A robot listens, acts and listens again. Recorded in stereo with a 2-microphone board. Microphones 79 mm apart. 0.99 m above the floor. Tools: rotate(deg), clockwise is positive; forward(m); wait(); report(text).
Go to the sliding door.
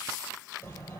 rotate(-20)
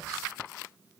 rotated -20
forward(1.0)
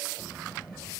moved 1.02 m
forward(1.0)
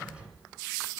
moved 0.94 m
rotate(15)
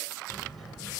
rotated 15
forward(1.0)
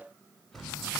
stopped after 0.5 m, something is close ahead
report("Arrived at the sliding door, straight ahead.")